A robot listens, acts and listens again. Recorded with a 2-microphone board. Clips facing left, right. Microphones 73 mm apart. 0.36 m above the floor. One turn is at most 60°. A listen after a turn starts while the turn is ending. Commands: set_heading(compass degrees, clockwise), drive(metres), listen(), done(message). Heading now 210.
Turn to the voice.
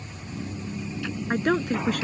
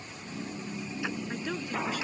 set_heading(150)
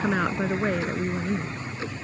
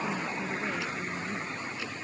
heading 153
set_heading(93)
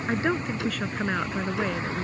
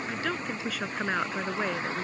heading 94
done("Facing the woman speaking.")